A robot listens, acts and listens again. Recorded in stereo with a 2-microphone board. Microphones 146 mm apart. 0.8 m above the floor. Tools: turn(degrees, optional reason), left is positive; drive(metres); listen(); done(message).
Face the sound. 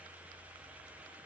listen()
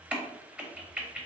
turn(degrees=-30)
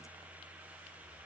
listen()
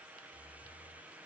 done("I heard a crack, but can't make it out now. It was about 20° left or 140° right.")